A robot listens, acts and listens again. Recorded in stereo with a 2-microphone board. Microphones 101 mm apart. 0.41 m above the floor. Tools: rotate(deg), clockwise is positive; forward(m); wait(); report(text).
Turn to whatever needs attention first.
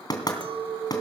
wait()
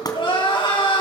rotate(-60)
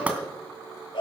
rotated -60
rotate(-55)
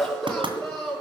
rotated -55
report("Found it: crying, straight ahead, over 4 m away.")